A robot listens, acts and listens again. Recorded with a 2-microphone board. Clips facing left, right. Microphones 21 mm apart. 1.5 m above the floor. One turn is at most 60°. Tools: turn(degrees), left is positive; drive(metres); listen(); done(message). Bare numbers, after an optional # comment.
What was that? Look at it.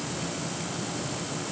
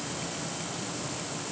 listen()
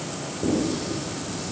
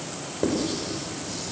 # The writing: about 75° right or 105° right.
turn(-60)
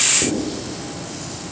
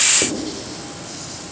# So it is at 45° right.
turn(-45)
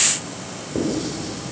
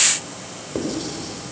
# The writing is now 20° right.
turn(-20)
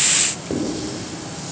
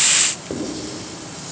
done("Facing the writing, over 4 m away.")